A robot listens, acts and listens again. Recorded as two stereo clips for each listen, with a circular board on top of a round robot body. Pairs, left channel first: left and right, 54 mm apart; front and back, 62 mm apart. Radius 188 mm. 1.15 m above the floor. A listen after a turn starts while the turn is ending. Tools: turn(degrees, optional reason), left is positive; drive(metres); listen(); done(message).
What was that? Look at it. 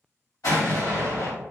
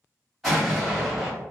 turn(degrees=90, reason="The explosion: 90° left.")
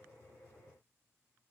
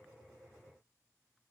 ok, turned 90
done("I heard an explosion from this way, but can't make it out now.")